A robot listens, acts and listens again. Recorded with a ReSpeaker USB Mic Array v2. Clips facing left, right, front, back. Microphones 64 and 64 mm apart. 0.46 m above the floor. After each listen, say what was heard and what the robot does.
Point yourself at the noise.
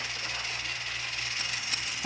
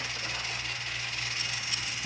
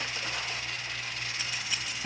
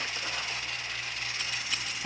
The scissors: 80° left. Turn 80° left.
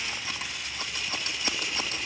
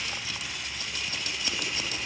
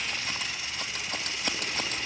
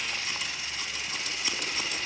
The scissors is now 35° left. Turn 35° left.
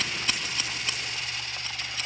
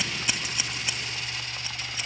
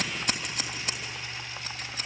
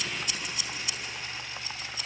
The scissors is now 15° right. Turn 15° right.
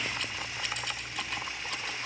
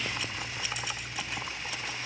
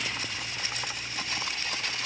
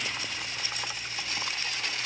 Keep listening.
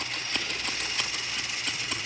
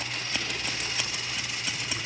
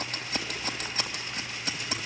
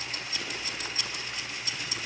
Facing the scissors, 2 to 4 m away.